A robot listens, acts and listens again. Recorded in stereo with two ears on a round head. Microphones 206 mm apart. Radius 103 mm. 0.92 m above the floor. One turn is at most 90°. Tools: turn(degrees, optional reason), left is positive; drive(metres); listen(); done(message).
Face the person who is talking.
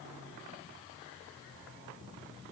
listen()
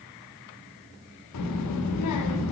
turn(degrees=90)
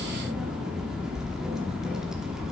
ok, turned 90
done("Facing the child speaking.")